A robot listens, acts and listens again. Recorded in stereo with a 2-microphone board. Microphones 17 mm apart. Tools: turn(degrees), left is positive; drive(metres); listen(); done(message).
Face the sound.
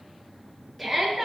turn(degrees=30)
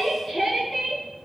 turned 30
turn(degrees=145)
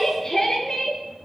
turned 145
turn(degrees=20)
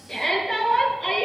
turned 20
done("Found it: a shout, straight ahead.")